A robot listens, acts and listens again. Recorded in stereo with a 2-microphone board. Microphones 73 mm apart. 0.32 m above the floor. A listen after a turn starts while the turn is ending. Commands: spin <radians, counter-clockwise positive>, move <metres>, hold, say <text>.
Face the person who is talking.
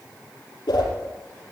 hold
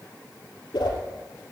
hold
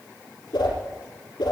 say I can't make out anyone speaking to turn to.